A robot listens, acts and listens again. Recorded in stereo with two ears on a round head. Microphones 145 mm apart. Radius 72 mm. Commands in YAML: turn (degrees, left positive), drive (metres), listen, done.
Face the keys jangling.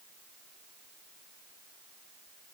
listen: true
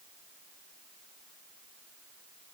listen: true
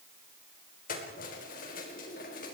turn: 60
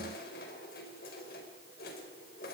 turn: 60
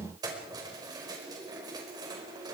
turn: -25
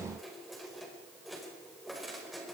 done: "Facing the keys jangling, over 4 m away."